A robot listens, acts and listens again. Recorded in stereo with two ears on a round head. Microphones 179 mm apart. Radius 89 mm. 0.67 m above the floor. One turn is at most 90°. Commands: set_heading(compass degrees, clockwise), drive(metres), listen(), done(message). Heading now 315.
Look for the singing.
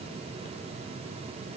listen()
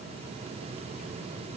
listen()
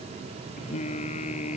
set_heading(280)
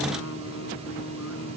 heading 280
set_heading(190)
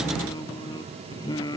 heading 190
set_heading(170)
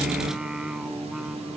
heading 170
done("Facing the singing.")